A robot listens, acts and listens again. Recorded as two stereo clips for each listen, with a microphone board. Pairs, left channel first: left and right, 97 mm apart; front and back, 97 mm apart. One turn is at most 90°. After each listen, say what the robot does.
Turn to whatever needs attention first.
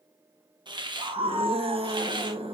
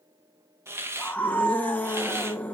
Turn 70° right.
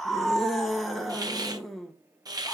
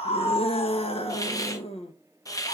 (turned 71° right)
Found it: a scream, straight ahead, 1 to 2 m away.